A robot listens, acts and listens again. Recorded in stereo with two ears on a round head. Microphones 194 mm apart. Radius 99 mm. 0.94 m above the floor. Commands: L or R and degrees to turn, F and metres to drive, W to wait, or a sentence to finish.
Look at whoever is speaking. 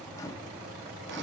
W
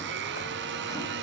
W
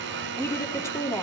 L30
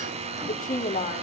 L140
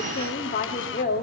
L40
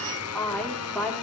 Facing the woman speaking.